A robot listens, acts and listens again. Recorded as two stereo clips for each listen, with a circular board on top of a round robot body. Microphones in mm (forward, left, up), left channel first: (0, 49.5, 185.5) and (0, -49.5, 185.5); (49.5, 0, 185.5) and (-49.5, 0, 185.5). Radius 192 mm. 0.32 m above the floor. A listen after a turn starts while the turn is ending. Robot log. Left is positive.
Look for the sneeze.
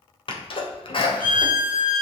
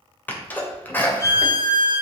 note: The sneeze: 70° left.
cmd yaw +70
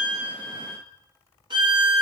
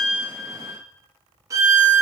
end: Facing where the sneeze came from. I can't hear it now.